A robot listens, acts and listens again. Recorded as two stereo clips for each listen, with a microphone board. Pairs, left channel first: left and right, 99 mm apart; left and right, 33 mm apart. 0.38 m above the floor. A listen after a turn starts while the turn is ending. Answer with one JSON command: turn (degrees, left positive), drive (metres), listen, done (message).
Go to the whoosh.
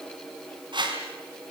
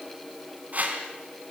{"turn": -50}
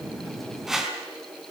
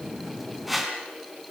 {"drive": 1.0}
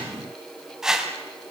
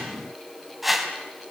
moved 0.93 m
{"drive": 1.0}
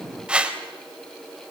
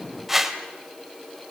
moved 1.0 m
{"turn": -10}
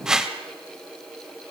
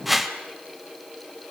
{"drive": 1.0}
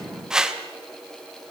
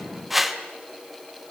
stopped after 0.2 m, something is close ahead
{"done": "I am next to the whoosh."}